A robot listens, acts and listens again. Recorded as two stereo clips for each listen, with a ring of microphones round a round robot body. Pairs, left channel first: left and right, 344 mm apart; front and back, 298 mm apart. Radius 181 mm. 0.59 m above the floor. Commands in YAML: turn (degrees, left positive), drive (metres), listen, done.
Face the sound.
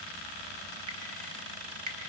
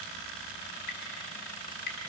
turn: -55
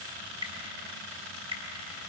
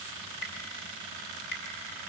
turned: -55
turn: -15
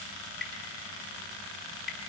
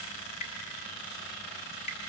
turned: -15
done: "Facing the dripping, 1 to 2 m away."